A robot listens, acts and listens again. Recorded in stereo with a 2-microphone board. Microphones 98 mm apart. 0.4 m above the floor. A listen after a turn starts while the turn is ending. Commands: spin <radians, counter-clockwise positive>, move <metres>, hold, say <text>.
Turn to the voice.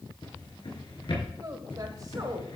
spin -0.70
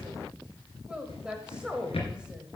spin -0.17
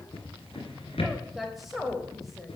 say Facing the woman speaking, 1 to 2 m away.